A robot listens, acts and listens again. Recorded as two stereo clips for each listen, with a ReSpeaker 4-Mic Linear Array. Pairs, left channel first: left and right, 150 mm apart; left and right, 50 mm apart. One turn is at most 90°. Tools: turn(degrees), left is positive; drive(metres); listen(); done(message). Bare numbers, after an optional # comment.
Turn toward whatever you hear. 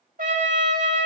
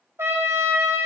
# The trumpet: about 65° right or 115° right.
turn(-65)
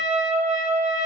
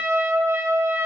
# So it is at 50° right.
turn(-50)
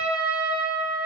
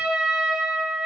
done("Facing the trumpet, 1 to 2 m away.")